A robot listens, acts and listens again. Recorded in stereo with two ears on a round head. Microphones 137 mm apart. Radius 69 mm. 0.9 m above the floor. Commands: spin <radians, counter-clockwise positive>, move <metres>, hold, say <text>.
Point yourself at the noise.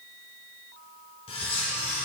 spin 0.61
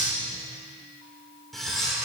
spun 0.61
say Facing the cutlery clinking.